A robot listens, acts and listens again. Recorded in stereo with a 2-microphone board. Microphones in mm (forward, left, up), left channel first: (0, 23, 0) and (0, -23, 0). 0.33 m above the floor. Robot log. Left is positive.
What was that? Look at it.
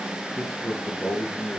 cmd yaw +30
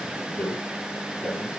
note: So it is at 145° left.
cmd yaw +145
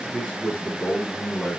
note: The man speaking is now 15° left.
cmd yaw +15
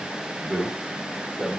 end: Found it: a man speaking, straight ahead, over 4 m away.